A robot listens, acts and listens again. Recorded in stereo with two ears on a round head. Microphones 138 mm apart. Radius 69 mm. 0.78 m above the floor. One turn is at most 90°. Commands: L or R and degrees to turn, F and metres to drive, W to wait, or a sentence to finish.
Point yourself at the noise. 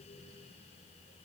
W
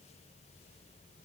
W
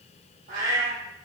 R75
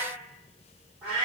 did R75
R15
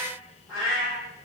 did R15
Facing the cat meowing.